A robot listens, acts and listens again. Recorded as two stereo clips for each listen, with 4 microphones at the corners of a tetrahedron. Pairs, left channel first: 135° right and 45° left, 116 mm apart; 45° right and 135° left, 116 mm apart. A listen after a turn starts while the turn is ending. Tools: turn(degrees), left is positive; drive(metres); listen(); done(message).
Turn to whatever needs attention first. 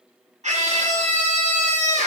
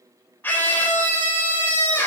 turn(degrees=30)
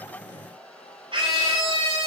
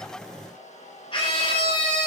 done("Facing the scream.")